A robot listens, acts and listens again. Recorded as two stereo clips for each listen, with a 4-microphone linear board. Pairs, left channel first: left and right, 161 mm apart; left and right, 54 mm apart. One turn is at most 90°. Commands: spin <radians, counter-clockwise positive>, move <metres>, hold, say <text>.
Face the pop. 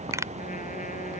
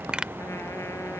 spin -0.35
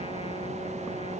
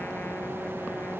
hold
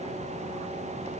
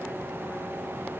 say I heard a pop, but can't make it out now. It was about straight ahead or 140° right.